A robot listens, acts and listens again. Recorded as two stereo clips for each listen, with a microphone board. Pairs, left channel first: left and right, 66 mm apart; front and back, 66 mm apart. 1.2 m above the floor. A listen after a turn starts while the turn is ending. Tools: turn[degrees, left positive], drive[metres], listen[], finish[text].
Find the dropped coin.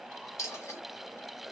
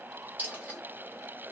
Thought: The dropped coin: 120° left.
Action: turn[120]
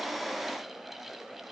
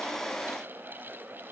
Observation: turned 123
Action: finish[Facing where the dropped coin came from. I can't hear it now.]